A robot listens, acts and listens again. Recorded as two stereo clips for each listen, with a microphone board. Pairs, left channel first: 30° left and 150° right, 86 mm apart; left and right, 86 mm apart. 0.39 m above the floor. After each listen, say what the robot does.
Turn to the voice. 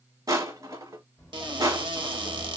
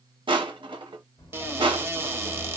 Turn 115° left.
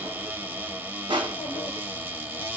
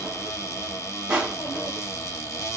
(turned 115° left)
Turn 50° left.
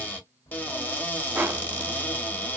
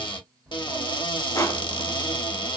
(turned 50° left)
Facing the child speaking, 1 to 2 m away.